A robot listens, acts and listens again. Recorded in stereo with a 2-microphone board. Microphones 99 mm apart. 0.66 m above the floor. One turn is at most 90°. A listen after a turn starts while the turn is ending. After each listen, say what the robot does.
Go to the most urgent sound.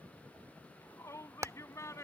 Turn 30° left.
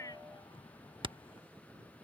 Keep listening.
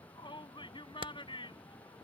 Turn 90° left.
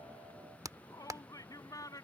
Turn 35° left.
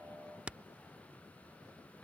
Keep listening.
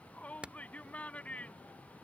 Turn 15° left.
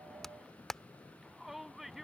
Drive 1.0 m forward.
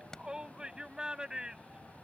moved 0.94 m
Turn 10° right.
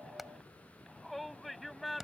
Drive 1.0 m forward.
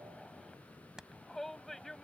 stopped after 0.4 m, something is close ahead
Blocked. The shout is further on, straight ahead.